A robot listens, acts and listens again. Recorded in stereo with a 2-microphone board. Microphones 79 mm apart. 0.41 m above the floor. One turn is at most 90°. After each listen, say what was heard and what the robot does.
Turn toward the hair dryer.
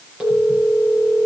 Keep listening.
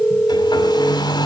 The hair dryer: about 60° left or 120° left. Turn 60° left.
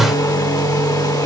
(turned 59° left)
So it is at 55° left. Turn 55° left.
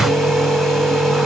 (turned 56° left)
Keep listening.
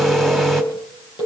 Keep listening.
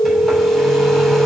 I heard a hair dryer from this way, but can't make it out now.